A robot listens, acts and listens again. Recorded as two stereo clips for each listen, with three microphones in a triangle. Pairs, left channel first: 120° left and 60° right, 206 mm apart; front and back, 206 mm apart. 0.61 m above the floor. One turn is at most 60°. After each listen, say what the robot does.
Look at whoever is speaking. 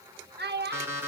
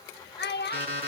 Turn 30° right.
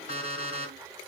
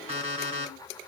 Keep listening.
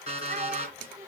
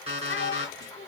Keep listening.
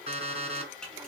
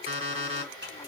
Facing where the child speaking came from. I can't hear it now.